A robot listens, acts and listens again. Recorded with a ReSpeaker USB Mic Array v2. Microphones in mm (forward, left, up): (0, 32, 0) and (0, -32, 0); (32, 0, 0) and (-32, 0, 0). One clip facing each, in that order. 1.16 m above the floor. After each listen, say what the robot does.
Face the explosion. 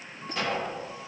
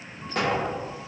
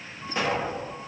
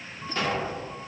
Turn 70° right.
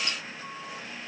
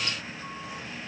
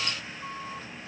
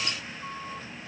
Facing where the explosion came from. I can't hear it now.